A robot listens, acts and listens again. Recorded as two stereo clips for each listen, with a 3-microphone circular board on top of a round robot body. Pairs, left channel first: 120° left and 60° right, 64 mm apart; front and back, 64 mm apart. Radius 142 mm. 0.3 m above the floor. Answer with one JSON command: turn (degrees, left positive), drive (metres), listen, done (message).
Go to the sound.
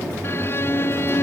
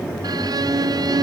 {"turn": 175}
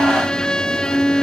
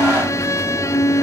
{"turn": 45}
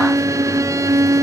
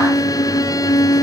{"turn": -25}
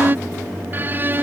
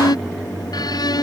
{"drive": 1.0}
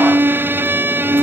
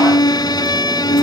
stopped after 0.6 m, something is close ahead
{"done": "Blocked. The violin is further on, straight ahead."}